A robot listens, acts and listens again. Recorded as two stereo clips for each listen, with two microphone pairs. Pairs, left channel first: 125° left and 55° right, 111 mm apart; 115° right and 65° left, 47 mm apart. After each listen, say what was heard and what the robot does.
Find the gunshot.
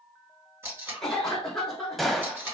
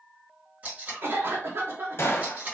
The gunshot: 140° right. Turn 140° right.
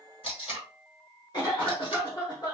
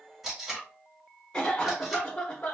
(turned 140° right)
Facing where the gunshot came from. I can't hear it now.